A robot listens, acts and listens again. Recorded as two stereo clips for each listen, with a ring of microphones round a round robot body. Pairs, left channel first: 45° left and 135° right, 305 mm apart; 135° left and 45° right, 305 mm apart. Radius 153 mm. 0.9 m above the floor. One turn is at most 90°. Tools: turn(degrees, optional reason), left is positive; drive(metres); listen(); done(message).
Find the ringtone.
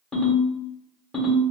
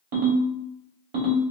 turn(degrees=-45, reason="The ringtone: 45° right.")
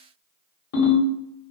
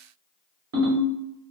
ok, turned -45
done("Facing the ringtone.")